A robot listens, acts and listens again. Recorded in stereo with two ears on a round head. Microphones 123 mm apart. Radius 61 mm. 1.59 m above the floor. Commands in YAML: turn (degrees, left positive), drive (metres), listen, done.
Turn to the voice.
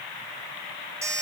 listen: true
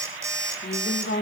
turn: 70
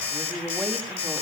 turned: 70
done: "Found it: a woman speaking, straight ahead, 2 to 4 m away."